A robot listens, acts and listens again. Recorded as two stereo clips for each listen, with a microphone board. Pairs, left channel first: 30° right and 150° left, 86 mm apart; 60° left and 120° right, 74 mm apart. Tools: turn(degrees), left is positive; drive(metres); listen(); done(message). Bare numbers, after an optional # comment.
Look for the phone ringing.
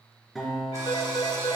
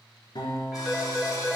# The phone ringing: 25° right.
turn(-25)
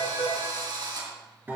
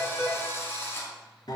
done("Facing the phone ringing, 2 to 4 m away.")